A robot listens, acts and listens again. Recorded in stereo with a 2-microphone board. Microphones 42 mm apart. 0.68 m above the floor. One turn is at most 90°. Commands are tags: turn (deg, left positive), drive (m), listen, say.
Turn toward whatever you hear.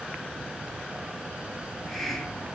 <turn deg="30"/>
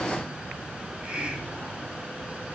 <turn deg="-25"/>
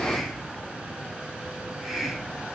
<say>Facing the hiss, 2 to 4 m away.</say>